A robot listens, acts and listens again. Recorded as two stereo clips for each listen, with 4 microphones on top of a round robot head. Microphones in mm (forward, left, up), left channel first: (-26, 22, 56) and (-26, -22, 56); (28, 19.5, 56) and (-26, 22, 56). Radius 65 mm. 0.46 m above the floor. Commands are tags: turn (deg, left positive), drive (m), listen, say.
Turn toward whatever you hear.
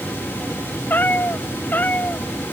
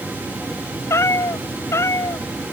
<turn deg="30"/>
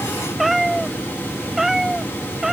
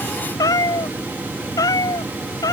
<say>Facing the cat meowing.</say>